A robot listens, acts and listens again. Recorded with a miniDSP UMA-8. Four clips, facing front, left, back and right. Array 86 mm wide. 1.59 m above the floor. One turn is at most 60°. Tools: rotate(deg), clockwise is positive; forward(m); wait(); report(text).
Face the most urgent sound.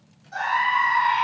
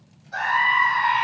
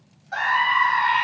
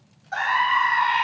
rotate(60)
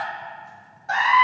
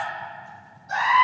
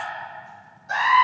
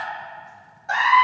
rotate(50)
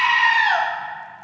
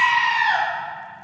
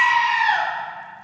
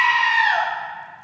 report("Found it: a scream, straight ahead, 2 to 4 m away.")